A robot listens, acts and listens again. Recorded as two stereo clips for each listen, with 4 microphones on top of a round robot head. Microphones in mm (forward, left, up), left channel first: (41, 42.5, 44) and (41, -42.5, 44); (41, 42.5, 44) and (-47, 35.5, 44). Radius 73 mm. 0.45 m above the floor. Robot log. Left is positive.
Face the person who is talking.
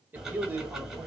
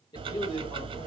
note: The man speaking: 25° right.
cmd yaw -25
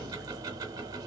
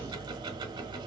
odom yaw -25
cmd idle
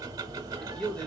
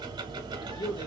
note: The man speaking is now 10° left.
cmd yaw +10
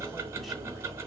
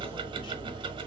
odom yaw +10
cmd idle
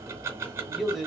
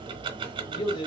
end: Found it: a man speaking, straight ahead, 1 to 2 m away.